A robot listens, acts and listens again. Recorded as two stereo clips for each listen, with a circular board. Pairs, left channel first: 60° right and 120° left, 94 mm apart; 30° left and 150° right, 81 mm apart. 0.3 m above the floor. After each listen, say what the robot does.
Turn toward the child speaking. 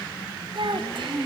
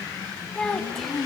Turn 115° left.
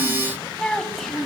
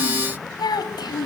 Turn 30° left.
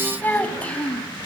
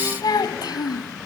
Turn 20° left.
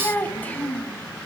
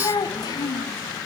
Turn 15° left.
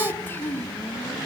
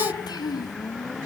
Facing the child speaking, 2 to 4 m away.